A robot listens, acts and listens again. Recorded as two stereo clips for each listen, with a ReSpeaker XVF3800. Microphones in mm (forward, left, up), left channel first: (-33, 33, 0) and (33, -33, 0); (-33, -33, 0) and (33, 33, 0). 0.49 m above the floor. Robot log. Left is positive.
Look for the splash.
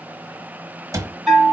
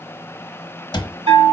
cmd idle
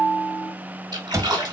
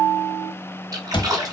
end: Found it: a splash, straight ahead, 1 to 2 m away.